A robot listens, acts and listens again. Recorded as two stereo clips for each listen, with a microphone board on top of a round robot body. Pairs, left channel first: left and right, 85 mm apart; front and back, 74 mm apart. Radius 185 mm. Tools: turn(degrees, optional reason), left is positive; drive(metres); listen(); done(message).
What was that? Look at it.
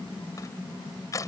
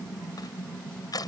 turn(degrees=40, reason="The crushing: 40° left.")
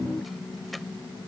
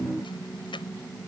listen()
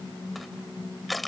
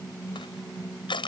done("Found it: crushing, straight ahead.")